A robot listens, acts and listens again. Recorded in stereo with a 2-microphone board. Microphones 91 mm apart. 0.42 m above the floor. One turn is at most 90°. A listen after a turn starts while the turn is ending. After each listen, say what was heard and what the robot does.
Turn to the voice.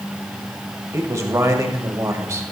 The man speaking: about 35° right or 145° right. Turn 35° right.
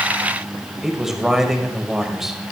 Facing the man speaking.